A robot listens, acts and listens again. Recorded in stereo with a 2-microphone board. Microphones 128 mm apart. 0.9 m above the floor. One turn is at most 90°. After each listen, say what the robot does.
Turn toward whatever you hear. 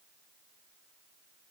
Keep listening.
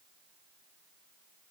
Keep listening.
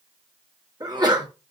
Turn 30° right.
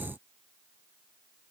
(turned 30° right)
Keep listening.
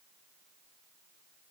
I heard a sneeze, but can't make it out now. It was about straight ahead or 120° right.